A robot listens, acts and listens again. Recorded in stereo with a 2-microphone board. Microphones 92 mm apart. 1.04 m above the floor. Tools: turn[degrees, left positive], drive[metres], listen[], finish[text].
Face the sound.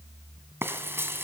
Thought: The frying: about 25° right or 155° right.
Action: turn[-25]
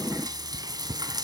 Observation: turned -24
Thought: So it is at 130° right.
Action: turn[-130]
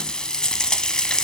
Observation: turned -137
Thought: The frying is now 10° left.
Action: turn[10]
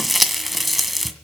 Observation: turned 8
Action: finish[Found it: frying, straight ahead, 1 to 2 m away.]